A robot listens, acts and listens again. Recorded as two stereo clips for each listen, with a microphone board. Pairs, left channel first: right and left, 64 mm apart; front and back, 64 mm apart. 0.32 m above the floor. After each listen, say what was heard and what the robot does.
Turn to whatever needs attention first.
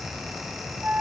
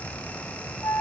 Keep listening.
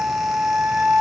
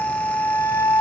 Keep listening.
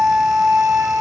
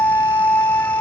I can't make out anything urgent to turn to.